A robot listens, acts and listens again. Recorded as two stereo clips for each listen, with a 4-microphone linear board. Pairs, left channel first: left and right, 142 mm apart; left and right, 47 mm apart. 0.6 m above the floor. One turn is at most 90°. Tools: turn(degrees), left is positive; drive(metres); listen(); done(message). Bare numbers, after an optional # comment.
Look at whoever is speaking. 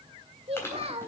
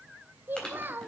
# The child speaking: about 45° right or 135° right.
turn(-45)
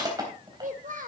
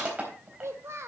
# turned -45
# So it is at 85° right.
turn(-85)
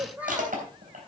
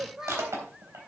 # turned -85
# The child speaking is now 10° right.
turn(-10)
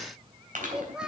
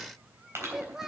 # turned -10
done("Found it: a child speaking, straight ahead.")